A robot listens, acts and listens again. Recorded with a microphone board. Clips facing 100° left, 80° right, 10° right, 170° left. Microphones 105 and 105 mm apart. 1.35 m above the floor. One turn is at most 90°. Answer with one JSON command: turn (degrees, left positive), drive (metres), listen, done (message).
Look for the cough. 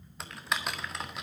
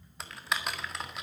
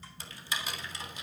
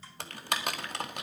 {"listen": true}
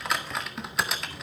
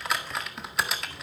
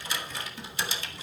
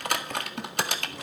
{"listen": true}
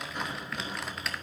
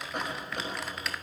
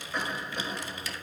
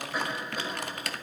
{"turn": -90}
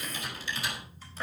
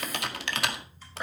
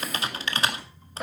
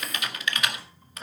{"turn": -10}
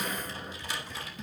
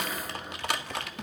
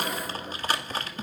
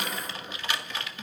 {"done": "Facing the cough, over 4 m away."}